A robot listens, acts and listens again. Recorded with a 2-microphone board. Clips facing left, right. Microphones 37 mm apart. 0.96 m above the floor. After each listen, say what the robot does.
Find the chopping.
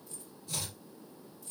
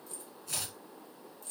Turn 90° right.
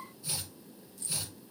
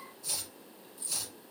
Turn 10° left.
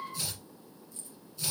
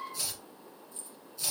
Found it: chopping, straight ahead, over 4 m away.